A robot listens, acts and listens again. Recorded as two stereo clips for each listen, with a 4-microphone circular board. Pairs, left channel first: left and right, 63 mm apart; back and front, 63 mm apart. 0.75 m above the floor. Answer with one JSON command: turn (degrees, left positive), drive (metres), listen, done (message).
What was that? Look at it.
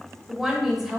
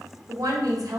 {"done": "Facing the woman speaking."}